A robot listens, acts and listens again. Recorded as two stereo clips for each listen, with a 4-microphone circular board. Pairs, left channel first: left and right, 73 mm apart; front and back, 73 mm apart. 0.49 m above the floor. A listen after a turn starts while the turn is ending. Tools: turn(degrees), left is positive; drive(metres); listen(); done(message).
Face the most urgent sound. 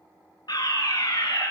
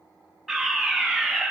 turn(degrees=90)
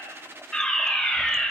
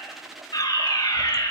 done("Facing the fire alarm.")